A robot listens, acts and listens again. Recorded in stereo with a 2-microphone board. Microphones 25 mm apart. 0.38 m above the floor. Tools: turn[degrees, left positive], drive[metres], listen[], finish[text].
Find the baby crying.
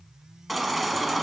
Action: turn[30]
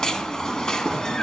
Thought: So it is at 150° left.
Action: turn[150]
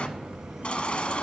Thought: The baby crying is now 55° left.
Action: turn[55]
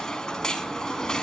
Thought: The baby crying is now 30° left.
Action: turn[30]
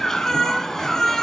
Thought: The baby crying is now 15° left.
Action: turn[15]
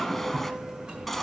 Action: finish[Found it: a baby crying, straight ahead.]